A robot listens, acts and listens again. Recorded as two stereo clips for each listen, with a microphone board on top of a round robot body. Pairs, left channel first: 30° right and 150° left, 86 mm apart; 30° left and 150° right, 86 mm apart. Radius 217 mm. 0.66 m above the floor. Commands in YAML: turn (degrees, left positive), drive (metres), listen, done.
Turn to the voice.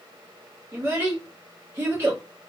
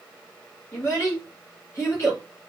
turn: 90
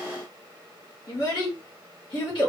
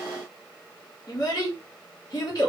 turn: -10
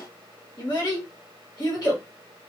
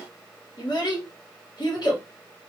done: "Found it: a child speaking, straight ahead, 1 to 2 m away."